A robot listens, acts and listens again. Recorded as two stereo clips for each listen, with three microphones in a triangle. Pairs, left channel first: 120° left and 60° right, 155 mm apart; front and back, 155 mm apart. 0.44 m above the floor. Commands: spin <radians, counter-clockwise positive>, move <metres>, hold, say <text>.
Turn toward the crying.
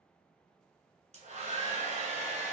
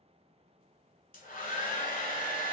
hold
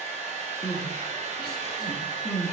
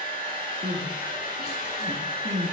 spin 3.05
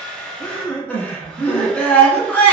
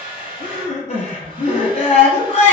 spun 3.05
spin 0.61
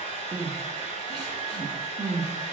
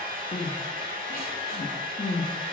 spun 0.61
say Found it: crying, straight ahead, 1 to 2 m away.